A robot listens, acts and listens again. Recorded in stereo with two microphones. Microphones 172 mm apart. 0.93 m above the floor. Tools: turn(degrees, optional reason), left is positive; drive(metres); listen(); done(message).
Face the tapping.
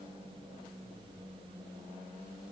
listen()
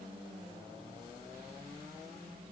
listen()
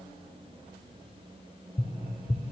turn(degrees=40, reason="The tapping: about 40° left or 140° left.")
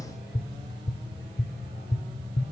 turn(degrees=100, reason="So it is at 100° left.")
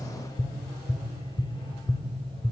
turn(degrees=25, reason="The tapping is now 25° left.")
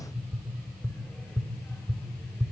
done("Found it: tapping, straight ahead, 1 to 2 m away.")